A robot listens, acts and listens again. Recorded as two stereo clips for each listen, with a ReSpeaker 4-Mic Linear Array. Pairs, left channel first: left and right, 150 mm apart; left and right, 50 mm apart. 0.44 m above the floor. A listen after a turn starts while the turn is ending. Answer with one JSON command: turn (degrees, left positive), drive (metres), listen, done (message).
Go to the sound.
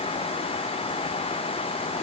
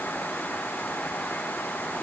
{"listen": true}
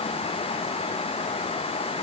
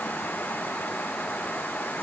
{"listen": true}
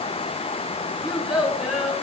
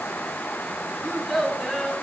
{"turn": -30}
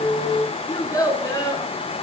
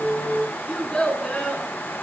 {"turn": 25}
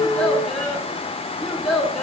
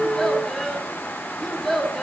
{"drive": 1.0}
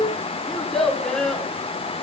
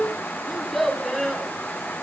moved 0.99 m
{"drive": 1.0}
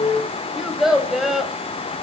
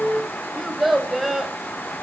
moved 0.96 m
{"drive": 1.0}
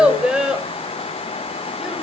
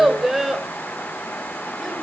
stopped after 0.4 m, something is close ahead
{"done": "I am next to the child speaking."}